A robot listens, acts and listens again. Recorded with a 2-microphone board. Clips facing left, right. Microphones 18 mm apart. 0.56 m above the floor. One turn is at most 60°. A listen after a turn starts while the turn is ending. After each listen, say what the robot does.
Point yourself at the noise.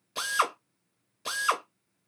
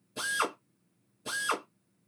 Turn 60° left.
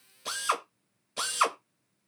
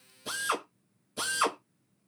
Turn 40° left.
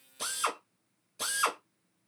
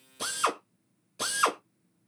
Turn 10° right.
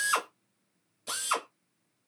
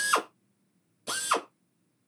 Found it: a drill, straight ahead, under 1 m away.